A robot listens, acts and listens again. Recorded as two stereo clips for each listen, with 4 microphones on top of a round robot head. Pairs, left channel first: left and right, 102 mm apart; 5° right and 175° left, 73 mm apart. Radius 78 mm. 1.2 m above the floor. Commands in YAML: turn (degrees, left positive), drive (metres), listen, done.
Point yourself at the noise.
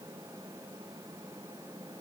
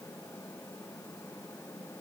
listen: true
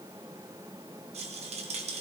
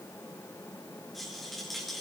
turn: -95
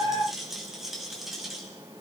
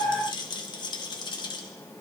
done: "Found it: a rattle, straight ahead, 2 to 4 m away."